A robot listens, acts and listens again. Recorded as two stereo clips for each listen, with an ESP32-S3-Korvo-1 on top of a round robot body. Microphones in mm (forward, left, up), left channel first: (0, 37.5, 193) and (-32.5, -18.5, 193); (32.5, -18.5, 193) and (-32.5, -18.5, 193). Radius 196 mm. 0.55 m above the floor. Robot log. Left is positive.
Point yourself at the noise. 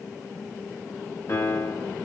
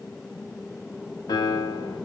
note: The piano: 10° left.
cmd yaw +10
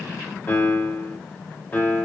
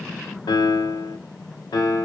end: Facing the piano, under 1 m away.